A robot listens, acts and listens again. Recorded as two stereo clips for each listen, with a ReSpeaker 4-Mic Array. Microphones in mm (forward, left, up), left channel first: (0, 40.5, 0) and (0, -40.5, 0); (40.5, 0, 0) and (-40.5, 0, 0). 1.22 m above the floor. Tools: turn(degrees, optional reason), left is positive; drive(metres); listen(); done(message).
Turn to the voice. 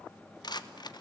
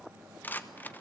listen()
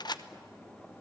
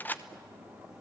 listen()
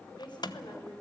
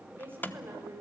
turn(degrees=115, reason="The woman speaking: 115° left.")
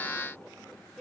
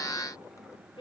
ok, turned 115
done("Facing the woman speaking, over 4 m away.")